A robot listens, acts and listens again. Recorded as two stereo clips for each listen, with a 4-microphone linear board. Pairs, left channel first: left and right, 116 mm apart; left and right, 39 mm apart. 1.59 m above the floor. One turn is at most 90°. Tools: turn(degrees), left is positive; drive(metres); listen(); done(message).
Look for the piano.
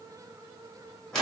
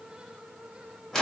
listen()
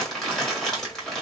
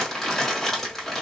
listen()
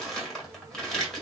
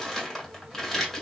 done("I can't make out a piano, only crumpling.")